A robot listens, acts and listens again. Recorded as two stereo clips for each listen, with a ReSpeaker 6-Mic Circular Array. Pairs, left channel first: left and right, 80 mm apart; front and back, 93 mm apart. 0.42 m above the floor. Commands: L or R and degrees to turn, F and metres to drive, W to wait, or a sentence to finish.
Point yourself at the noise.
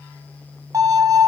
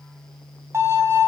R125
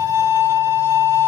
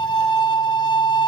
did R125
R30
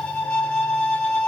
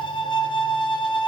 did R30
L15
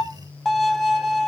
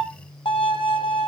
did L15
Found it: a violin, straight ahead, 2 to 4 m away.